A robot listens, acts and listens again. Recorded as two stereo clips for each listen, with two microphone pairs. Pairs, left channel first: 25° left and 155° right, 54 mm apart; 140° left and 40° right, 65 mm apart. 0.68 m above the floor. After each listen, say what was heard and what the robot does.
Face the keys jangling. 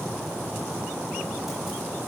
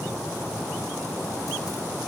Keep listening.
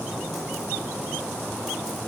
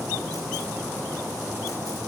Keep listening.
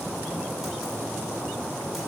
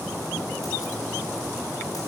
I can't make out keys jangling.